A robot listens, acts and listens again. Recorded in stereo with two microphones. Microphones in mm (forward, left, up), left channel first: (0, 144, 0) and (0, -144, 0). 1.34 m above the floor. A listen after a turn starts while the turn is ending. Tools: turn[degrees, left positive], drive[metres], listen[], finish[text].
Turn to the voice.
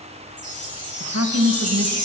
Thought: The woman speaking: about 60° right or 120° right.
Action: turn[-60]
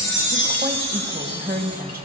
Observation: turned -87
Thought: So it is at 30° right.
Action: turn[-30]
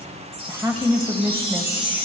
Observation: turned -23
Thought: The woman speaking is now 10° right.
Action: turn[-10]
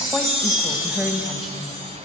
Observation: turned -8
Action: finish[Found it: a woman speaking, straight ahead, 1 to 2 m away.]